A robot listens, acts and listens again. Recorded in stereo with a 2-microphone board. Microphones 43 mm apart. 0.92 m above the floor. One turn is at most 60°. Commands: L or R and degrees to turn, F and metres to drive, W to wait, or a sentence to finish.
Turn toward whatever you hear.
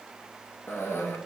L55
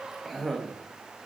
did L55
Found it: a cough, straight ahead.